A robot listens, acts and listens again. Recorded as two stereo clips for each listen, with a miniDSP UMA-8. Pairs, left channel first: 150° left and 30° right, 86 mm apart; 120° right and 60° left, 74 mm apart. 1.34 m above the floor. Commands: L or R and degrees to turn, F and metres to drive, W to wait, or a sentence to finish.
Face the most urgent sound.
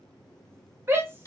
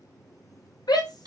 R95
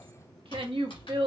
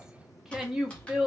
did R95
R20
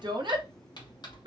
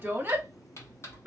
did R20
Found it: a shout, straight ahead, 1 to 2 m away.